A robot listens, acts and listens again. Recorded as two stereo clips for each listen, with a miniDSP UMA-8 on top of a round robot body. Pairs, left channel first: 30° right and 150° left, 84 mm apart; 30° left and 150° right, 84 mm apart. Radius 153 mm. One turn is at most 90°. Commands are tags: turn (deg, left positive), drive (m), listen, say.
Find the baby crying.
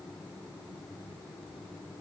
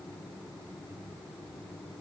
<listen/>
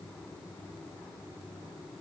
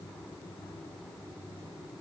<listen/>
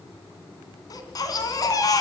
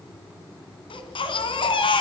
<turn deg="15"/>
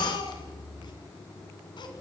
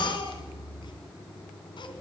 <say>Found it: a baby crying, straight ahead.</say>